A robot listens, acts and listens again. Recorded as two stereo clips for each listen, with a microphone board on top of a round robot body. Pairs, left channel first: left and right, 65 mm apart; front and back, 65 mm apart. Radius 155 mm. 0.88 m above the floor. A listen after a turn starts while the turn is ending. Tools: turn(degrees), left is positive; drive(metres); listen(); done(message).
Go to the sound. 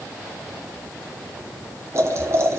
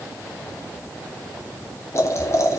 turn(degrees=-45)
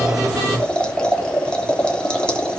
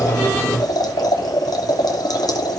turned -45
turn(degrees=15)
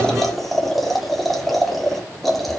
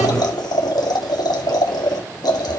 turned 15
drive(metres=1.0)
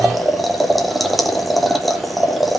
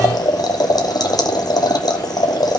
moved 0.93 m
drive(metres=1.0)
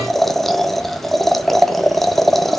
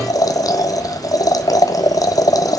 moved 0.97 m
drive(metres=1.0)
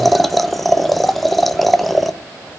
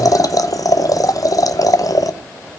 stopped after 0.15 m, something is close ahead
done("I am next to the boiling.")